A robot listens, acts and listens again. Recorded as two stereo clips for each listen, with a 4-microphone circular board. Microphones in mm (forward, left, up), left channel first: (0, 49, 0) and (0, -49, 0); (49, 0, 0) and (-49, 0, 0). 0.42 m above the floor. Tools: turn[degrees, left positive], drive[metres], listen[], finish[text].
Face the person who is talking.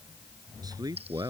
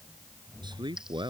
Thought: The man speaking: 140° right.
Action: turn[-140]
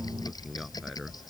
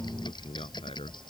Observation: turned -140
Action: finish[Facing the man speaking.]